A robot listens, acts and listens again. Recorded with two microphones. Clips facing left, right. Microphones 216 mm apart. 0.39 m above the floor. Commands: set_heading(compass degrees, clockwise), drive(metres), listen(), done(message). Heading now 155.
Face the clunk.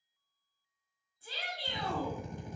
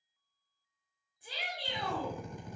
listen()
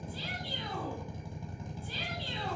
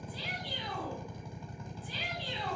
listen()
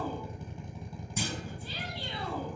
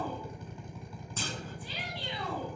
set_heading(125)
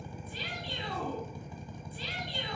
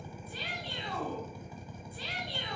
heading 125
listen()
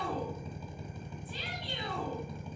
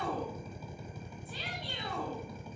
done("I heard a clunk, but can't make it out now. It was about 15° right or 135° left.")